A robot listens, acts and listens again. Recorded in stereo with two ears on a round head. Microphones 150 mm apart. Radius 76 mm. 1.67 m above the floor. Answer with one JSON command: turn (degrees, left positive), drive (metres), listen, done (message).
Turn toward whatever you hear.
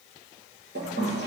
{"turn": -70}
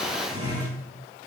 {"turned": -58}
{"turn": -25}
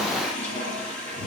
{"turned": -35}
{"turn": 10}
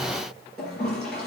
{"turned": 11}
{"done": "Found it: a toilet flushing, straight ahead, over 4 m away."}